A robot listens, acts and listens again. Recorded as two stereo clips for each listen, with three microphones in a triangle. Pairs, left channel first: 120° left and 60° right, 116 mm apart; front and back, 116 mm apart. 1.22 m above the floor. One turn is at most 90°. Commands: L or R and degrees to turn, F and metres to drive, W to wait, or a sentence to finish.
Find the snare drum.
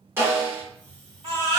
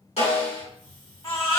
L10
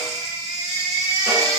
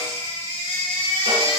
W
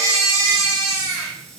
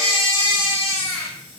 Found it: a snare drum, straight ahead, 1 to 2 m away.